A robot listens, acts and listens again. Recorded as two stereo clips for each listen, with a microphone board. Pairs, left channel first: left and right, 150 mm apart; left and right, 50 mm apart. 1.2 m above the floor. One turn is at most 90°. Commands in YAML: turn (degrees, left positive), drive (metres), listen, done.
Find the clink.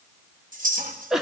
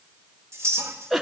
turn: -70
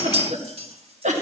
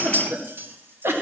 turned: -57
turn: -50
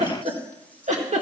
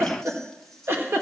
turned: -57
turn: 10
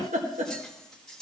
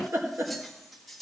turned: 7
listen: true
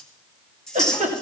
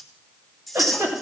done: "Facing the clink."